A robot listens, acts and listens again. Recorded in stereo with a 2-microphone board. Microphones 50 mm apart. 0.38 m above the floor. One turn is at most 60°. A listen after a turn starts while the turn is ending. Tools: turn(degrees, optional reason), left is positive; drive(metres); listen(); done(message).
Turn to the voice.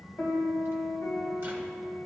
listen()
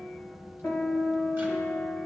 listen()
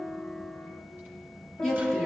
turn(degrees=30)
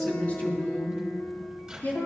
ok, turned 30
turn(degrees=60, reason="So it is at 145° left.")
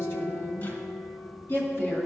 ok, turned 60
turn(degrees=60, reason="The woman speaking is now 65° left.")
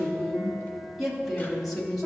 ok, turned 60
done("Facing the woman speaking.")